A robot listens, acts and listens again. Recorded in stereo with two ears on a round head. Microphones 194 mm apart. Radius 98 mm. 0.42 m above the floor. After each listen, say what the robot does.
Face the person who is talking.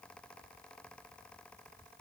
Keep listening.
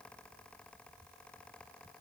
Keep listening.
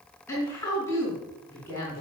Turn 30° left.
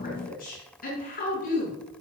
Turn 140° left.
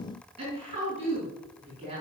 Turn 25° right.
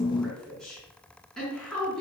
Facing the woman speaking.